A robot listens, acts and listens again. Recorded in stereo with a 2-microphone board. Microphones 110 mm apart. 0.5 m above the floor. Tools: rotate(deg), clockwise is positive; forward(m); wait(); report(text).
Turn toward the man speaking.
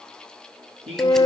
rotate(55)
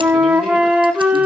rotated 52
wait()
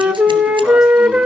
wait()
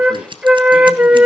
report("I heard a man speaking, but can't make it out now. It was about 5° right or 70° right.")